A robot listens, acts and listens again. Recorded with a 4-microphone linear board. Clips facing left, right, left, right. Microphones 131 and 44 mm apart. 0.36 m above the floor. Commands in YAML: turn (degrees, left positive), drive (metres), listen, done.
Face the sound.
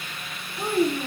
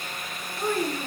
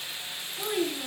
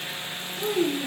turn: 30
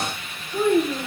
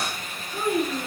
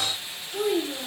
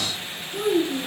done: "Found it: a child speaking, straight ahead, 2 to 4 m away."